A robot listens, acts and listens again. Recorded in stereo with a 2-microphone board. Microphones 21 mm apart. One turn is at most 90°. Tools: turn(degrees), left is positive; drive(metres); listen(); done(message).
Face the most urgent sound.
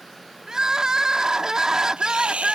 turn(degrees=-35)
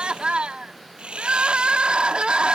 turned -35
turn(degrees=-90)
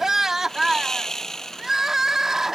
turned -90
turn(degrees=-20)
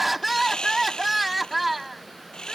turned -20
done("Facing the crying.")